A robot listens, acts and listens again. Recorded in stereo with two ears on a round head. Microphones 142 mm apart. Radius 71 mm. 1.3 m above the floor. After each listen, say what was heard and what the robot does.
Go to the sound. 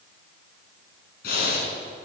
The breathing: about 65° left or 115° left. Turn 65° left.
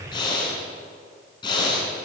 So it is at 30° left. Turn 30° left.
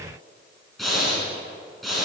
Drive 1.0 m forward.
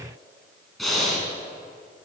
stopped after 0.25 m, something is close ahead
Something is in my way. I am facing the breathing but have not reached it.